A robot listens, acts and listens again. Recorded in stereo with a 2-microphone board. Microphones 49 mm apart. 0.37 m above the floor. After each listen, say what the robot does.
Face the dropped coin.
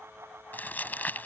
Keep listening.
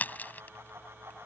Keep listening.
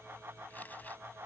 I can't make out a dropped coin to turn to.